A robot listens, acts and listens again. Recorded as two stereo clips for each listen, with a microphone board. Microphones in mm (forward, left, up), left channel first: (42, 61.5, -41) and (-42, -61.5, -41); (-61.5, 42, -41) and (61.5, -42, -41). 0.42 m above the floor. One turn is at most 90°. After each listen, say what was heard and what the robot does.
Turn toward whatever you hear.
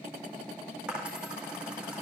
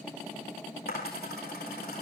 The dropped coin: 150° left. Turn 90° left.
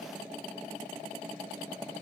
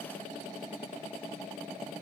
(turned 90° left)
Nothing new. It was at 60° left. Turn 60° left.
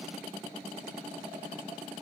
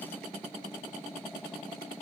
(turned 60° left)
I heard a dropped coin from this way, but can't make it out now.